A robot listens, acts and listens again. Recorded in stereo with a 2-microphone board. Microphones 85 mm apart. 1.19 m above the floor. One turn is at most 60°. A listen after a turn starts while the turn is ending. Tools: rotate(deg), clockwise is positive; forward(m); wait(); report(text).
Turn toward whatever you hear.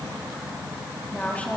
rotate(-15)
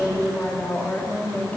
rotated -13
rotate(-20)
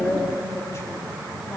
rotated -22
rotate(-60)
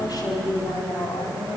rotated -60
rotate(-60)
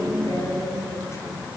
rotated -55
rotate(-40)
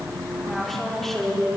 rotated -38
report("Facing the woman speaking.")